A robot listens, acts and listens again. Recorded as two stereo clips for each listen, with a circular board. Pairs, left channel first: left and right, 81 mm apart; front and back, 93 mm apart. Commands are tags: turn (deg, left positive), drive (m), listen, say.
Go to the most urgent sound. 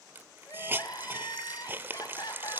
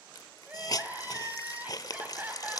<turn deg="110"/>
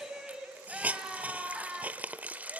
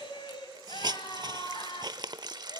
<turn deg="-10"/>
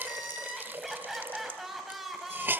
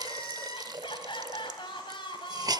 <drive m="1.0"/>
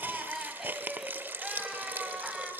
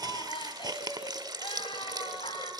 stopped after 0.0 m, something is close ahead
<say>Something is in my way. I am facing the crying but have not reached it.</say>